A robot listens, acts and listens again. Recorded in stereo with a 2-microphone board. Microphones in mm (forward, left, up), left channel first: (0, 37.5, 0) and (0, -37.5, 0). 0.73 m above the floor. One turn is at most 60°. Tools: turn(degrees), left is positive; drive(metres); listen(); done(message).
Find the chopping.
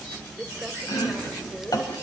turn(degrees=60)
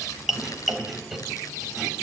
done("Found it: chopping, straight ahead, 2 to 4 m away.")